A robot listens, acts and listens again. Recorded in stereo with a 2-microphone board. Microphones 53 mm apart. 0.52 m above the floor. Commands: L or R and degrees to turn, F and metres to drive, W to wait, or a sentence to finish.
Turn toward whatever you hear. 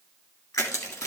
L90
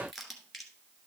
Facing the crushing.